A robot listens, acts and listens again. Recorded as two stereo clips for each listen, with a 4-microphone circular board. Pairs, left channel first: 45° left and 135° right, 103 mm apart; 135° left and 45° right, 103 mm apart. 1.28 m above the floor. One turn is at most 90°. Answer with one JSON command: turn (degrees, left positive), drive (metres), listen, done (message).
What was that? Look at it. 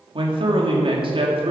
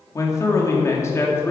{"turn": -90}
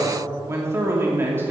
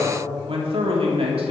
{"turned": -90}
{"turn": -65}
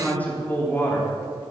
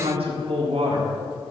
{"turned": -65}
{"turn": -25}
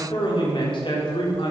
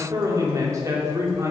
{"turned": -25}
{"turn": 15}
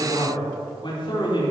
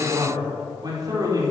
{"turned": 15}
{"done": "Found it: a man speaking, straight ahead, 2 to 4 m away."}